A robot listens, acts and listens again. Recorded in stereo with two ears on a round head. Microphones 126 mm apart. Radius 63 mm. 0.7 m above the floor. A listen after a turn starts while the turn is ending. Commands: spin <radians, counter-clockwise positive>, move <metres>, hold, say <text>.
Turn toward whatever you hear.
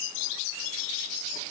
hold
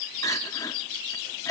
spin 0.44
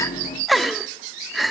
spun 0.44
say Facing the crying, under 1 m away.